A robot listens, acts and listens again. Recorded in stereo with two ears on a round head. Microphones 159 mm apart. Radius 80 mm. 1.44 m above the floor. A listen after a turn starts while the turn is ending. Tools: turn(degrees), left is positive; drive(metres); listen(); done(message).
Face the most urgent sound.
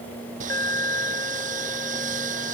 turn(degrees=15)
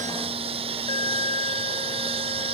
turn(degrees=150)
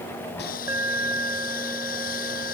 turn(degrees=-15)
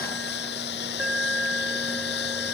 done("Found it: an alarm, straight ahead.")